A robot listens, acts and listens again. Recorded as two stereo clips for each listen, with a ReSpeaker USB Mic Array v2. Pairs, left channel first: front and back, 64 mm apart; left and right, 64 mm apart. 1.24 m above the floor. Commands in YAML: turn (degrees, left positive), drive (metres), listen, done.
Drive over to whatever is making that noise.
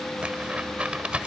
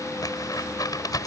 turn: 105
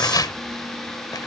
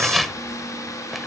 drive: 1.0
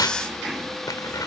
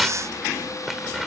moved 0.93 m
drive: 1.0
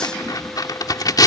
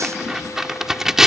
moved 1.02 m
drive: 1.0
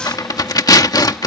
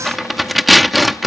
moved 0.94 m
drive: 1.0
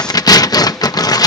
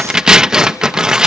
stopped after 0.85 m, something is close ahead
turn: -10
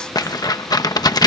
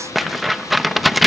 done: "I am next to the tearing paper."